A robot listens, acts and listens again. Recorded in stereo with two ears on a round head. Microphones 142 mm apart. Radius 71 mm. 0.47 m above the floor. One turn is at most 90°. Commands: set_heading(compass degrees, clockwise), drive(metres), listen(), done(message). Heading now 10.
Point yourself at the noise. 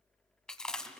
set_heading(340)
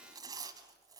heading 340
set_heading(5)
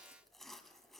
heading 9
done("Found it: chewing, straight ahead, 1 to 2 m away.")